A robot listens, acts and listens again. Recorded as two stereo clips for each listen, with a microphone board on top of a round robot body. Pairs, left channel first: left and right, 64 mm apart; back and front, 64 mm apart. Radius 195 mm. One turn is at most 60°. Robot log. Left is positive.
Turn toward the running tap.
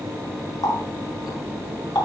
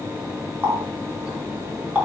note: The running tap: 65° left.
cmd yaw +60
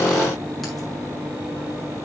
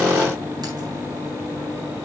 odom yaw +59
cmd idle
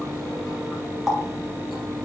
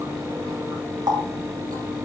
end: Facing the running tap, over 4 m away.